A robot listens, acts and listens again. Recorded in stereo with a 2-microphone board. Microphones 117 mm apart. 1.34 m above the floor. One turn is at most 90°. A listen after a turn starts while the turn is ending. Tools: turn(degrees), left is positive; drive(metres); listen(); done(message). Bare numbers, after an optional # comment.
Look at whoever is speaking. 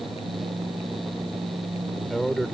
turn(30)
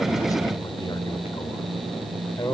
# So it is at 145° left.
turn(90)
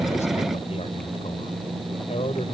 # The man speaking is now 65° left.
turn(65)
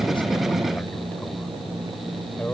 # The man speaking is now 15° left.
turn(15)
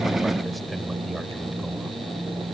listen()
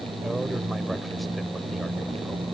listen()
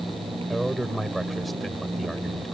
done("Facing the man speaking.")